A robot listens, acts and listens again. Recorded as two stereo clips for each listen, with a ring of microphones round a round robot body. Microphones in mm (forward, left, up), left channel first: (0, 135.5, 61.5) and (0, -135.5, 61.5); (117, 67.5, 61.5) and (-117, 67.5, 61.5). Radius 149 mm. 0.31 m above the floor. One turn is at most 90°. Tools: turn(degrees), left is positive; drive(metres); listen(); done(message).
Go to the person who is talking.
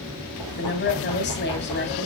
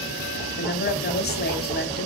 turn(degrees=45)
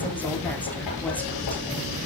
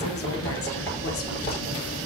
listen()
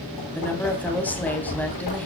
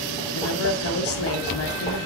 drive(metres=1.0)
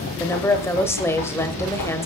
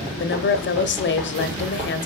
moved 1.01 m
turn(degrees=10)
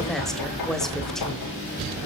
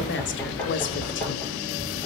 listen()
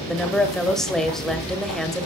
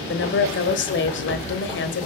drive(metres=1.0)
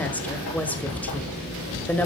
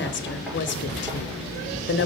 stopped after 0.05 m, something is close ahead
done("Arrived at the woman speaking, straight ahead.")